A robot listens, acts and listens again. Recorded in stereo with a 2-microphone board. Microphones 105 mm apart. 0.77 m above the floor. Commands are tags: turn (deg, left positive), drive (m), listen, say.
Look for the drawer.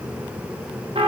<listen/>
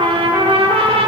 <listen/>
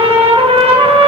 <say>I can't make out a drawer, only a trumpet.</say>